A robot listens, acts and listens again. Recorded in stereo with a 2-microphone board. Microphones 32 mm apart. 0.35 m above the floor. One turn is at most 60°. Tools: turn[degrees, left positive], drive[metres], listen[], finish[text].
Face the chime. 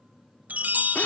Thought: The chime: about 65° right or 115° right.
Action: turn[-60]
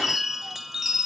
Thought: So it is at 10° right.
Action: turn[-10]
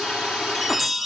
Action: finish[Found it: a chime, straight ahead, under 1 m away.]